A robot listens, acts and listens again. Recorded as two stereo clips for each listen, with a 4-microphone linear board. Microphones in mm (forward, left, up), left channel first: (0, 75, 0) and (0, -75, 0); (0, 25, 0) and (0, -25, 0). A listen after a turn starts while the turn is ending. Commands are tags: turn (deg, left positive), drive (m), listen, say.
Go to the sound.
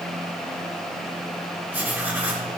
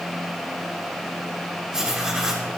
<turn deg="-30"/>
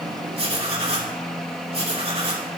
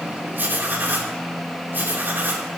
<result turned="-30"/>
<turn deg="-135"/>
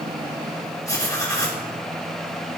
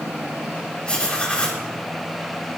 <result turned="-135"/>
<turn deg="25"/>
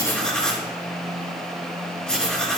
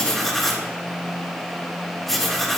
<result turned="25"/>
<drive m="1.0"/>
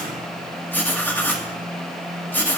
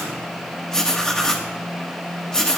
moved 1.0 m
<turn deg="15"/>
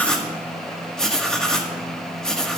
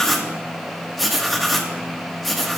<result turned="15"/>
<drive m="1.0"/>
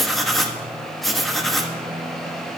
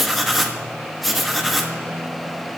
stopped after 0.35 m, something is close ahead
<say>Arrived at the writing, straight ahead.</say>